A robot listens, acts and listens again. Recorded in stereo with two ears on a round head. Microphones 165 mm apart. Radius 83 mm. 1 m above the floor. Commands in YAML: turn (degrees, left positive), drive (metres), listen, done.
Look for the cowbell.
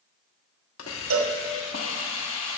turn: -90
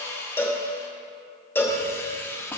turn: 10
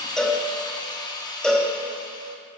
done: "Found it: a cowbell, straight ahead."